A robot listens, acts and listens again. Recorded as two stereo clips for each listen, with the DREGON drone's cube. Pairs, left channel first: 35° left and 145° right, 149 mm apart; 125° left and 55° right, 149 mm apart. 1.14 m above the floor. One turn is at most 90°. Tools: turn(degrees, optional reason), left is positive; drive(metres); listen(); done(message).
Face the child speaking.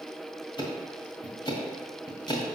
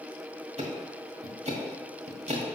listen()
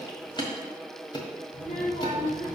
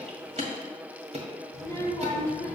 turn(degrees=50, reason="The child speaking: 50° left.")
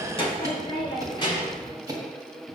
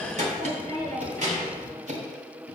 turn(degrees=-25, reason="The child speaking is now 25° right.")
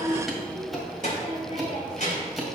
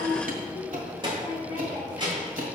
done("Found it: a child speaking, straight ahead, 2 to 4 m away.")